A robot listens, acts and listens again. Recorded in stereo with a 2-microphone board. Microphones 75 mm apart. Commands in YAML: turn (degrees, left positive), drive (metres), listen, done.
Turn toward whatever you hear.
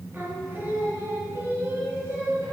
turn: -40
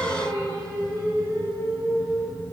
turn: -95
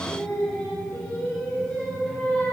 turn: 20
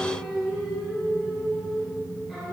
done: "Facing the singing, over 4 m away."